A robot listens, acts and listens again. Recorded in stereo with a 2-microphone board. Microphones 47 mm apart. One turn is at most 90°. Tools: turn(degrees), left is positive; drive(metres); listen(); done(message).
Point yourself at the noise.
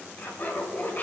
turn(degrees=45)
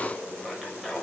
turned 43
done("Found it: laughter, straight ahead, 2 to 4 m away.")